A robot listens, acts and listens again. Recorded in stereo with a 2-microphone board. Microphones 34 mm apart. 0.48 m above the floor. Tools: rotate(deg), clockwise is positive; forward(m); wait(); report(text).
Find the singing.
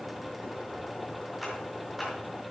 wait()
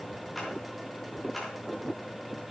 wait()
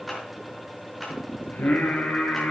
rotate(-65)
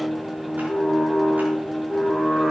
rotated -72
report("Facing the singing, over 4 m away.")